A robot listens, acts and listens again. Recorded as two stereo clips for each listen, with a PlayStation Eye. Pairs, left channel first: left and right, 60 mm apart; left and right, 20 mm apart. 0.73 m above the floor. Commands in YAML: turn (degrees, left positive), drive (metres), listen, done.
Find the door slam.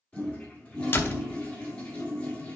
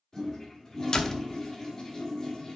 turn: 35
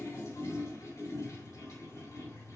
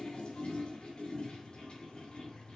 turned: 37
listen: true
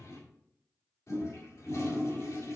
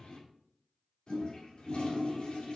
done: "I heard a door slam, but can't make it out now. It was about straight ahead or 105° left."